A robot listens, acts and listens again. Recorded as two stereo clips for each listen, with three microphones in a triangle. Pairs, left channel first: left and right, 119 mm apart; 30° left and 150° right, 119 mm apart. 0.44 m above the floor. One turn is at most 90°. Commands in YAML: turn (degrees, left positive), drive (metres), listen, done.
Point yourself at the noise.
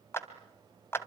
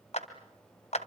turn: 25
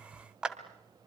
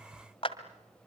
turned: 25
done: "Facing the clap, 2 to 4 m away."